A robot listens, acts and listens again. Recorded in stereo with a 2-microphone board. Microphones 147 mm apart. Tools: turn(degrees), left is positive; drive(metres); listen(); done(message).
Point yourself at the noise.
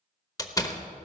turn(degrees=25)
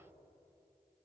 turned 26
listen()
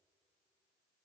done("I heard a door slam, but can't make it out now. It was about straight ahead or 130° left.")